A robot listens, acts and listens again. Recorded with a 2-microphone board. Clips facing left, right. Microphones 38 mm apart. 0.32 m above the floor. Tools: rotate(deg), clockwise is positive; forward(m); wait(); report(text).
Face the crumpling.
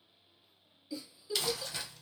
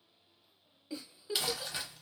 rotate(15)
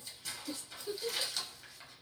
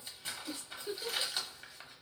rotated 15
rotate(150)
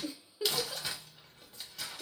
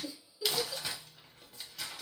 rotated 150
report("Facing the crumpling.")